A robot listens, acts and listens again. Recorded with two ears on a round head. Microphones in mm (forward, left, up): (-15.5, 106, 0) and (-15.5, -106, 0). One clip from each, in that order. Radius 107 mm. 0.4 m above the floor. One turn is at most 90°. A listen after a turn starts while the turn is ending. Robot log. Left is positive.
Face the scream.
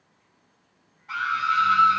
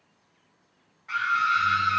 note: The scream: about 45° right or 135° right.
cmd yaw -45
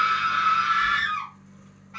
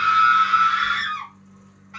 note: So it is at 80° right.
cmd yaw -80
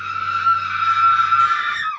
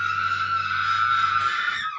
note: The scream is now 10° right.
cmd yaw -10
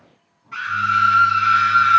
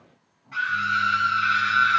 end: Facing the scream, 1 to 2 m away.